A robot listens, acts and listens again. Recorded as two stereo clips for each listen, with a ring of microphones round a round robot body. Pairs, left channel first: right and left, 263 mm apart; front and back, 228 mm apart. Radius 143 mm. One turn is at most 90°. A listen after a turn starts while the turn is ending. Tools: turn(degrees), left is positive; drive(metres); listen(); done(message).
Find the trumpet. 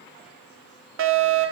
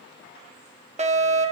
listen()
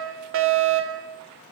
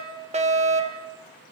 listen()
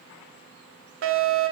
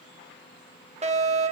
done("I can't make out a trumpet, only a fire alarm.")